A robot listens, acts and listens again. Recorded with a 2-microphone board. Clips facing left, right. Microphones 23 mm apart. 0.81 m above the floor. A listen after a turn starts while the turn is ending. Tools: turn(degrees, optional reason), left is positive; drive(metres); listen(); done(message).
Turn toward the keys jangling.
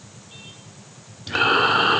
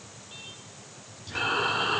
listen()
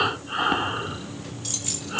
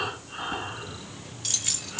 turn(degrees=-20, reason="The keys jangling: about 20° right or 160° right.")
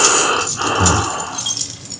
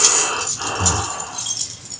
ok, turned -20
turn(degrees=30, reason="So it is at 30° left.")
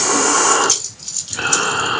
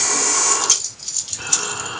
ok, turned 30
done("Found it: keys jangling, straight ahead.")